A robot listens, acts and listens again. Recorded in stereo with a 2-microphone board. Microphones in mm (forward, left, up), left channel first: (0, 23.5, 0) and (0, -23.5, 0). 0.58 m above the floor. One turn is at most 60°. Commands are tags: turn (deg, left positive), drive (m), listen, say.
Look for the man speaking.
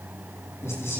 <turn deg="60"/>
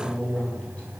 <turn deg="20"/>
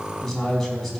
<say>Found it: a man speaking, straight ahead, over 4 m away.</say>